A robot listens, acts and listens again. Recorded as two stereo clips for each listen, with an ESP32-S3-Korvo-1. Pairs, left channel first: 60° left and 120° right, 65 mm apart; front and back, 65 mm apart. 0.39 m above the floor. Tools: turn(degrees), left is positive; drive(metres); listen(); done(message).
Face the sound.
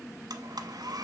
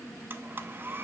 turn(degrees=-120)
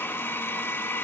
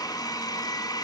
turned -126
done("Facing the blender, under 1 m away.")